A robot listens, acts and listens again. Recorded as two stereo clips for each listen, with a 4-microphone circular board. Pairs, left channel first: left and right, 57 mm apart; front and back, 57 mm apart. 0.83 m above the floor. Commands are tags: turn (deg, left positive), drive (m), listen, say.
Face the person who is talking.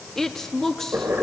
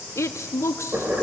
<turn deg="10"/>
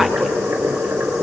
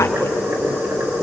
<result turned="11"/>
<listen/>
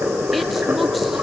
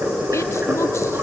<listen/>
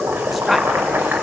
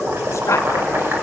<say>Facing where the woman speaking came from. I can't hear it now.</say>